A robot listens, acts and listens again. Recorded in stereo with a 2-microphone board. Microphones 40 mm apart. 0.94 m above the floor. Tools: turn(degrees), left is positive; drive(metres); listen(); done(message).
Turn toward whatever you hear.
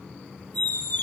turn(degrees=45)
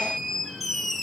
done("Found it: a squeak, straight ahead, under 1 m away.")